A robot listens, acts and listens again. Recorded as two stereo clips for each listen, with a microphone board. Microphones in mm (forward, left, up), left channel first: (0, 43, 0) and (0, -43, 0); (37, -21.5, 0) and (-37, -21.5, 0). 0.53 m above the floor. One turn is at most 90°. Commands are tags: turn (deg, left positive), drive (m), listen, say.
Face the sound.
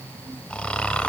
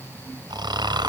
<turn deg="90"/>
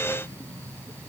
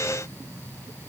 <turn deg="80"/>
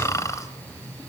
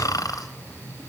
<turn deg="40"/>
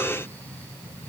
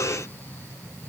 <listen/>
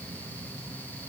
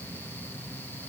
<listen/>
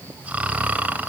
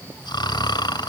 <turn deg="-15"/>
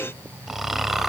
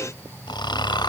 <say>Found it: snoring, straight ahead.</say>